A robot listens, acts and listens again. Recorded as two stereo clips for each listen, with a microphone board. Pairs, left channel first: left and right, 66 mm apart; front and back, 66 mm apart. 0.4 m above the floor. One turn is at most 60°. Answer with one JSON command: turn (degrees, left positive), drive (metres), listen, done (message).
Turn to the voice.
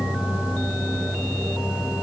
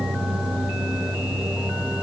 {"listen": true}
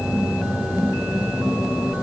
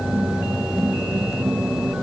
{"listen": true}
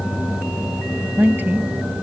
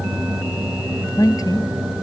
{"turn": -25}
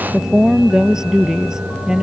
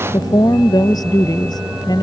{"turn": -10}
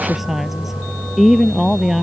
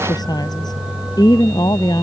{"done": "Facing the woman speaking."}